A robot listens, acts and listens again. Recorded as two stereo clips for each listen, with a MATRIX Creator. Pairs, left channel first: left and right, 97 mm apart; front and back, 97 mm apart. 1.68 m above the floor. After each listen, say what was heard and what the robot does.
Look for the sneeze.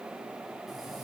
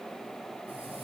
Keep listening.
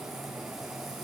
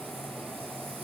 Keep listening.
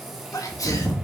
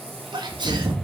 The sneeze: 140° left. Turn 140° left.
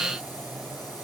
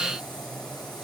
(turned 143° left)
Facing where the sneeze came from. I can't hear it now.